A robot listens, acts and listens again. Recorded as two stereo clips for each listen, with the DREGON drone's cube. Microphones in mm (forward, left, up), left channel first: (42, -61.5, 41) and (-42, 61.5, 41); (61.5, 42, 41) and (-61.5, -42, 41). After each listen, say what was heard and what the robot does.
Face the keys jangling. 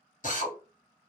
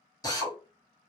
Keep listening.
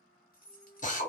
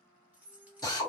The keys jangling: 65° right. Turn 65° right.
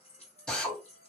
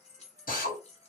The keys jangling is now 10° right. Turn 10° right.
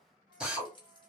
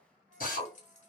Facing the keys jangling.